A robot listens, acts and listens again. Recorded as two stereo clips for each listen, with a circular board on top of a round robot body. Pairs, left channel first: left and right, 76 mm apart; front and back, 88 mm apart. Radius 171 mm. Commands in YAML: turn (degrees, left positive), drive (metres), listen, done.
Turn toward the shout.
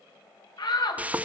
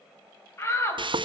turn: 60
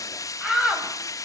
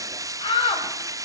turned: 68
done: "Facing the shout."